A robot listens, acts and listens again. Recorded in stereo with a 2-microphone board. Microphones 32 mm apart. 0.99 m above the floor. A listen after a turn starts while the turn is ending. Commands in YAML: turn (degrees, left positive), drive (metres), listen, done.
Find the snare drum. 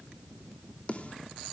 turn: 40
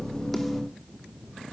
listen: true
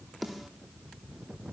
done: "Facing the snare drum."